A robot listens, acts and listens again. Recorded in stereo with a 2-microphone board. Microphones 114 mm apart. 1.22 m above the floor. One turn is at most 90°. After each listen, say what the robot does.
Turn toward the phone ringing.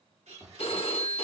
Turn 60° left.
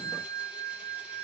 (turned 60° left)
Turn 50° left.
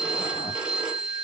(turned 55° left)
Turn 10° right.
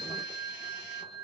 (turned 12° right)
Facing the phone ringing.